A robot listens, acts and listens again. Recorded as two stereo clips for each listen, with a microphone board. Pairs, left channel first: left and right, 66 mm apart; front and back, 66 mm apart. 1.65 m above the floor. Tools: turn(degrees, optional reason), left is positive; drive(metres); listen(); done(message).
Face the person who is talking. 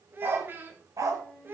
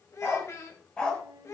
turn(degrees=-35, reason="The child speaking: 35° right.")
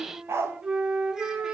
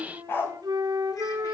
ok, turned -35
listen()
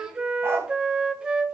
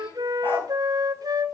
listen()
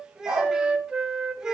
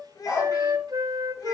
turn(degrees=-10, reason="The child speaking is now 10° right.")
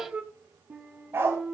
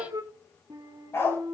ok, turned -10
listen()
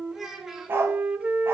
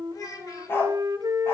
done("Found it: a child speaking, straight ahead, 1 to 2 m away.")